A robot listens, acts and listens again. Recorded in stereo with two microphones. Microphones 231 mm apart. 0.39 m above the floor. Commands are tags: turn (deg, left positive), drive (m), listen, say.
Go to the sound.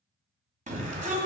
<turn deg="-35"/>
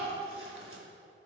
<listen/>
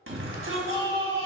<turn deg="-110"/>
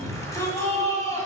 <turn deg="15"/>
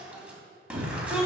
<drive m="1.0"/>
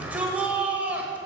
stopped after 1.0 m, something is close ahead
<turn deg="-10"/>
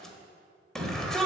<say>I am next to the shout.</say>